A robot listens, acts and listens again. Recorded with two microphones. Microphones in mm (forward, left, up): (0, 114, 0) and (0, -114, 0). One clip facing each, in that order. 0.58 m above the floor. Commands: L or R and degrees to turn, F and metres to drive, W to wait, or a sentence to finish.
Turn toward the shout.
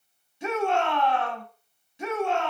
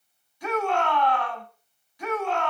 L25
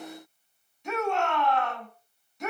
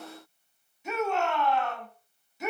Facing the shout.